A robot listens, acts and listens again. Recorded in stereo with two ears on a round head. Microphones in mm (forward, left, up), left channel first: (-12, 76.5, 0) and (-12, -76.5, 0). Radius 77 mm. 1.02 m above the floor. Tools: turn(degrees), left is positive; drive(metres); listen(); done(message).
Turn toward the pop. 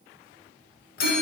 listen()
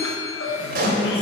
turn(degrees=-55)
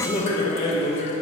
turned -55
listen()
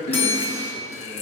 done("I heard a pop, but can't make it out now. It was about straight ahead or 70° right.")